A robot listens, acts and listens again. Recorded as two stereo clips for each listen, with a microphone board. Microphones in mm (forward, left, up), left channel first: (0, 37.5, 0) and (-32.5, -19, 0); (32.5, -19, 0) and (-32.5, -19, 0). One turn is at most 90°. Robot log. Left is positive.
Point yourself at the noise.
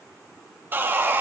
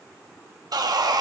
note: The sawing: straight behind.
cmd yaw +90
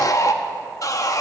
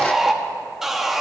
note: The sawing is now 95° left.
cmd yaw +90
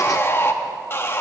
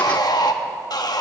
end: Found it: sawing, straight ahead.